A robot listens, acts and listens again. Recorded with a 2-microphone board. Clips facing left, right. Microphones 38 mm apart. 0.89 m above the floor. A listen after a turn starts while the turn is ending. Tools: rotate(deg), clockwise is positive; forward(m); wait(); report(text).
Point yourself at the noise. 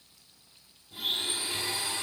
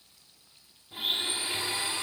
rotate(30)
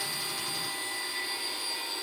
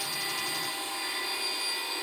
rotate(120)
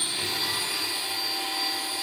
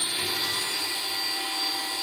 report("Facing the blender.")